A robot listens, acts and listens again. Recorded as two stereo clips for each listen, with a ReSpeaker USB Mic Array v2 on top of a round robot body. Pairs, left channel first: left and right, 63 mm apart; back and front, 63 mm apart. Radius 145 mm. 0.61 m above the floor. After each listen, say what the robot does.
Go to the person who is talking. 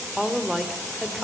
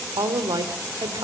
Drive 1.0 m forward.
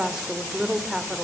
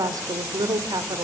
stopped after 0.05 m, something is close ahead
Turn 10° right.
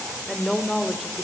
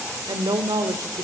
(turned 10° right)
Blocked. The woman speaking is further on, straight ahead.